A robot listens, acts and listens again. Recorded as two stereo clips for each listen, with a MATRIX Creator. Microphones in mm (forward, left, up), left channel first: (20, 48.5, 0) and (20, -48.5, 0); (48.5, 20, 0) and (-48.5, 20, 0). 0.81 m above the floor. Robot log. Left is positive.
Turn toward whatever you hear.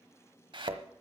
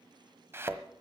note: The thud: 115° right.
cmd yaw -115
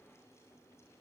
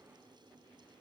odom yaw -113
end: Facing where the thud came from. I can't hear it now.